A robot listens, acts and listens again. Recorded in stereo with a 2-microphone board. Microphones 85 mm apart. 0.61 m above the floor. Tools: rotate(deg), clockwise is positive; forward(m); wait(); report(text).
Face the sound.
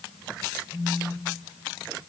rotate(-30)
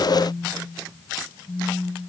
rotate(-145)
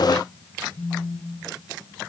rotate(-30)
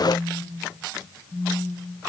report("Facing the phone buzzing.")